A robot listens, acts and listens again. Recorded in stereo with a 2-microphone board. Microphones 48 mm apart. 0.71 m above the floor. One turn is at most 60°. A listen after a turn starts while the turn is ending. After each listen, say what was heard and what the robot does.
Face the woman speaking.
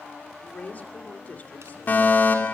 The woman speaking: about 35° left or 145° left. Turn 35° left.
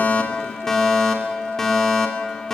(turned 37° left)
Keep listening.
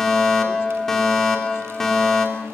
Keep listening.
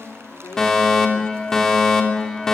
So it is at 105° left. Turn 60° left.
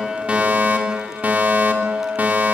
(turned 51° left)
Nothing new. It was at 55° left. Turn 55° left.
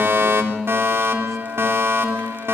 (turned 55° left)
Keep listening.
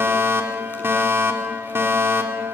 Facing where the woman speaking came from. I can't hear it now.